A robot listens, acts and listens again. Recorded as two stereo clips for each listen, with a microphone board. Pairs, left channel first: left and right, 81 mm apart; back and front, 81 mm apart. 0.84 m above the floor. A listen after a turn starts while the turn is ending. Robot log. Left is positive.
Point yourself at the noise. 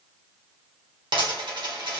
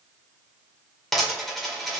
note: The dropped coin: 90° right.
cmd yaw -90
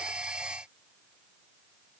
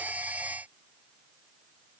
end: Facing where the dropped coin came from. I can't hear it now.